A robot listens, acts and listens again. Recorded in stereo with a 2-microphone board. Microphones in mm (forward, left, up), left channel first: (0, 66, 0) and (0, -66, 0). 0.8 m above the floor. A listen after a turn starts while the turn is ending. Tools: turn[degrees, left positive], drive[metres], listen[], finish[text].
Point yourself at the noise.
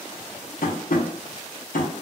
Action: turn[90]
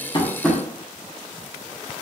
Action: finish[Facing the tapping, under 1 m away.]